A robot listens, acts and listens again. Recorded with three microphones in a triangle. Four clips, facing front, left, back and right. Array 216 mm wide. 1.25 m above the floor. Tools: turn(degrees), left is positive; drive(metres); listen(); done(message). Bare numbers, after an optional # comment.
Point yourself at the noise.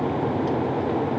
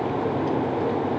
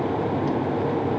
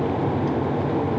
listen()
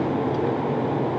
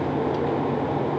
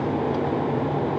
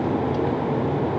listen()
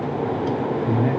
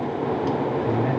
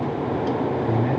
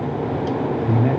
# The man speaking: 65° right.
turn(-65)
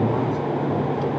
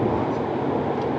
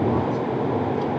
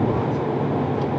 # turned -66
listen()
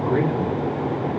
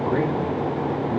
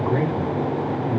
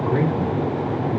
done("Facing the man speaking.")